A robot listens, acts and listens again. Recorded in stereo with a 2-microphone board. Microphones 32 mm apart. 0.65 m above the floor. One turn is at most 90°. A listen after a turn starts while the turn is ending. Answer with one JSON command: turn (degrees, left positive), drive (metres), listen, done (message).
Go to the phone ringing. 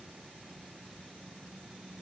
{"listen": true}
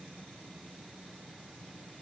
{"listen": true}
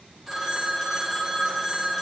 {"turn": 30}
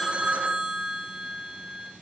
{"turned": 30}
{"turn": -30}
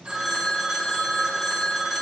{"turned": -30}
{"turn": 10}
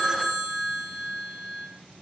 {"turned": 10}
{"drive": 1.0}
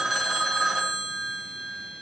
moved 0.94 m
{"drive": 1.0}
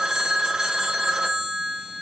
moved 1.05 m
{"turn": -15}
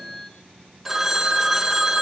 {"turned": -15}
{"drive": 1.0}
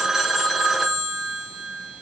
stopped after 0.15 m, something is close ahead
{"done": "Arrived at the phone ringing, straight ahead."}